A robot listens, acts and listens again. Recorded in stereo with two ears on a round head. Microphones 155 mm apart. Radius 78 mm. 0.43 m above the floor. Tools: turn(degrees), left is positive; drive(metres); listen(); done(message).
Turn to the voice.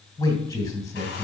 turn(degrees=20)
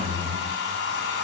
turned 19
done("Facing the man speaking, 2 to 4 m away.")